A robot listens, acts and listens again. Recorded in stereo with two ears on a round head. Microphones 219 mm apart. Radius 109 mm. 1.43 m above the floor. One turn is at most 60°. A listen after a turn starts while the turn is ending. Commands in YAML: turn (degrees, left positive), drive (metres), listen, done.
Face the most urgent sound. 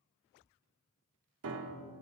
listen: true
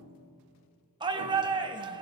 turn: -20
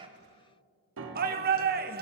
turn: -60
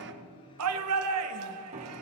turn: -60
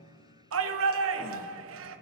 turn: -60
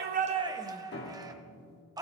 turn: -15
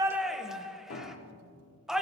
done: "Found it: a shout, straight ahead, 1 to 2 m away."